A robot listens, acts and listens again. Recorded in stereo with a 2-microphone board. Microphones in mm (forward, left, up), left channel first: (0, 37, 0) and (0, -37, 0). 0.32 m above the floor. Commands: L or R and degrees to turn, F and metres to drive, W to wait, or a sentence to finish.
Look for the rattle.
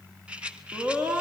R30
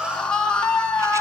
W
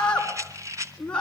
R135
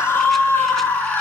W
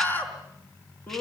W
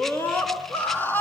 I heard a rattle from this way, but can't make it out now.